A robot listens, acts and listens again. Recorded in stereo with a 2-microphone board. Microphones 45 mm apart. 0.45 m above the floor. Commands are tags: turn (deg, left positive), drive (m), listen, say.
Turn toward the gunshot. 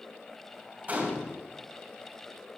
<turn deg="-35"/>
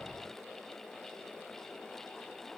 <listen/>
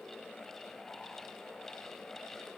<say>I heard a gunshot, but can't make it out now. It was about straight ahead or 110° right.</say>